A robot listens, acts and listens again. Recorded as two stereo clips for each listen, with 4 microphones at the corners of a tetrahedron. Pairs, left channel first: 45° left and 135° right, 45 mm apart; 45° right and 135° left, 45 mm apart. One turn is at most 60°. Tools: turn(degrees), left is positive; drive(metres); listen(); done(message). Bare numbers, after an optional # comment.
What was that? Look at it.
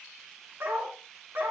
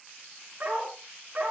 # The dog barking: 160° right.
turn(-60)
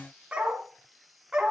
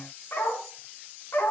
# The dog barking is now 60° right.
turn(-60)
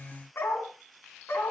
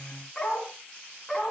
# The dog barking is now 35° left.
turn(35)
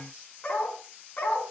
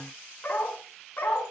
done("Facing the dog barking, 2 to 4 m away.")